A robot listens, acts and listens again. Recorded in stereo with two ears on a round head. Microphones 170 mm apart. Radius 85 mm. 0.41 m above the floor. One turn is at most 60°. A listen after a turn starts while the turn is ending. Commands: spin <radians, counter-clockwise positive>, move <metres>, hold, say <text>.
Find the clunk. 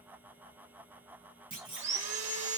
spin -0.44
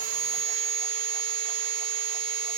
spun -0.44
hold
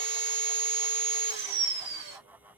say I heard a clunk, but can't make it out now. It was about straight ahead or 130° right.